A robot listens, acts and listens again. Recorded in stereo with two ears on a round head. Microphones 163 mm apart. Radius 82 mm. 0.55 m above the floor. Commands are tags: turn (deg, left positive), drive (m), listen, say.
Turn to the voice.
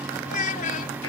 <turn deg="45"/>
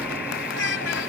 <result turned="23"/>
<turn deg="110"/>
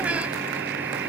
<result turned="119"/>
<turn deg="-10"/>
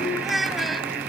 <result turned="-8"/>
<say>Facing the child speaking.</say>